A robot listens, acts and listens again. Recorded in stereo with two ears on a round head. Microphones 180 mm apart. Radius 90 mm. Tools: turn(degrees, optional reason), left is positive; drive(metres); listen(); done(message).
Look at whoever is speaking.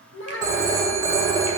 turn(degrees=70, reason="The child speaking: about 70° left or 110° left.")
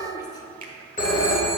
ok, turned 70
turn(degrees=20, reason="So it is at 20° left.")
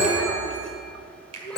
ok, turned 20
done("Facing the child speaking.")